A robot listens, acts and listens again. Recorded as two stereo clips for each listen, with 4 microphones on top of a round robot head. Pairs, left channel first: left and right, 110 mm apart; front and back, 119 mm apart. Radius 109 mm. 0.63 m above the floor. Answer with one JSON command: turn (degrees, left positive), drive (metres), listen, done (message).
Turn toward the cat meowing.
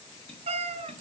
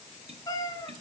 {"turn": -70}
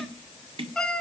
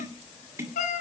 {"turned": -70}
{"done": "Facing the cat meowing, under 1 m away."}